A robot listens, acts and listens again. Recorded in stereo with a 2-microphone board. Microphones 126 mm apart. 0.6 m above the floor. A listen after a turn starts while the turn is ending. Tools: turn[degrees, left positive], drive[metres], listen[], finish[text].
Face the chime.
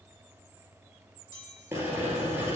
Thought: The chime: about 35° left or 145° left.
Action: turn[35]
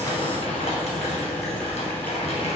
Action: listen[]
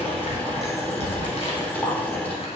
Action: listen[]
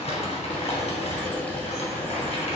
Action: finish[I heard a chime, but can't make it out now. It was about straight ahead or 110° left.]